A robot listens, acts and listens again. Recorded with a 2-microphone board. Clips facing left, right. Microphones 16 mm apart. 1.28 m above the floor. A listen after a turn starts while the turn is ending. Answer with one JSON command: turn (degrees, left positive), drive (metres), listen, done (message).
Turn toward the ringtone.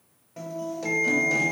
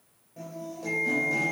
{"turn": 60}
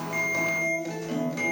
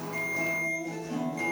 {"done": "Found it: a ringtone, straight ahead, 1 to 2 m away."}